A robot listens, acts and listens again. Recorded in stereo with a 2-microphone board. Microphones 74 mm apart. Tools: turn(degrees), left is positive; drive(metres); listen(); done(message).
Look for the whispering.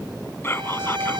turn(degrees=30)
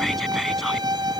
listen()
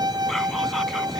listen()
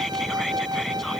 done("I heard whispering, but can't make it out now. It was about straight ahead or 120° left.")